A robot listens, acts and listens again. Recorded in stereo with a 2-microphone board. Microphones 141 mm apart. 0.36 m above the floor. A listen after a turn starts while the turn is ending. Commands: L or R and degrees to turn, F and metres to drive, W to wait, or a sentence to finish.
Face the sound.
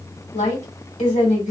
L55
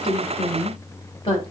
L50
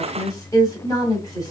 L30
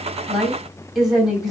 Facing the woman speaking.